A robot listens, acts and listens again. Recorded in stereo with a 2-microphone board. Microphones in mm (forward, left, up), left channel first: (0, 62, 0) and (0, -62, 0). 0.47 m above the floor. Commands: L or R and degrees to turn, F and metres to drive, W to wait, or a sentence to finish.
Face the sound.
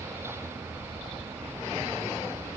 W
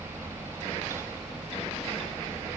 W
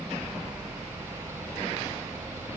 I can't make out anything to turn to.